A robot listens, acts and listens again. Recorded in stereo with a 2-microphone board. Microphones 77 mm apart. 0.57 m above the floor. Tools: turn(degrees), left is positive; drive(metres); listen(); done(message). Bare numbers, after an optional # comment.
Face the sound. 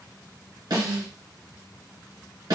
# The snare drum: about 65° right or 115° right.
turn(-65)
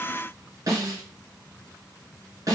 # So it is at 45° right.
turn(-45)
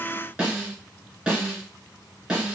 # The snare drum is now 10° right.
turn(-10)
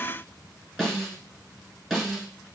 done("Found it: a snare drum, straight ahead.")